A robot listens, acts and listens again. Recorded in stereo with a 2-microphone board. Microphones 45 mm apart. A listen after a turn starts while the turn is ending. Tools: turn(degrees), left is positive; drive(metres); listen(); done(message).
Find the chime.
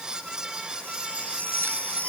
turn(degrees=30)
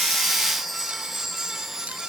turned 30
done("Found it: a chime, straight ahead.")